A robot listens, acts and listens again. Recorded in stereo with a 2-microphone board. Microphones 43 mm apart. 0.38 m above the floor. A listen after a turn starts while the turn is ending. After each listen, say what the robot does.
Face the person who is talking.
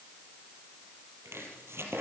Keep listening.
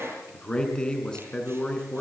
Turn 20° left.
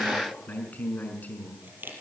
Turn 140° left.
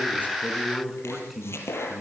Found it: a man speaking, straight ahead.